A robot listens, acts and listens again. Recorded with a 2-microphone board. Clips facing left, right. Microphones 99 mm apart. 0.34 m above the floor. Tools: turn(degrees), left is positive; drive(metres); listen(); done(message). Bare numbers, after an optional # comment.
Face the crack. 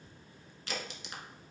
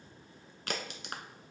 # The crack: about 60° right or 120° right.
turn(-60)
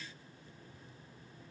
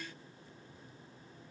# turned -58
listen()
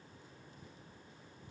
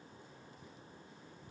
done("I heard a crack, but can't make it out now. It was about straight ahead or 65° right.")